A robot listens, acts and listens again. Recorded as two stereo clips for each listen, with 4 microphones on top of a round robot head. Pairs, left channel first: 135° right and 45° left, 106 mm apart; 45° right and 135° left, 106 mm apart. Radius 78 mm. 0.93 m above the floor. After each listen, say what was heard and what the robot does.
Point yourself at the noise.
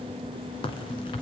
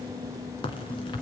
The crack: 90° right. Turn 90° right.
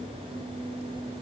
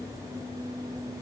I heard a crack from this way, but can't make it out now.